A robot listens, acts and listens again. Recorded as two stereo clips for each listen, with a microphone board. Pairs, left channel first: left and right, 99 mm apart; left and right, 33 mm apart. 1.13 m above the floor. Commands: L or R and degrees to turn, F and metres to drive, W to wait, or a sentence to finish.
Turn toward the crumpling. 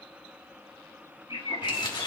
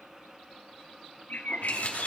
L55
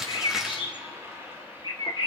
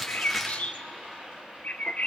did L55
Found it: crumpling, straight ahead.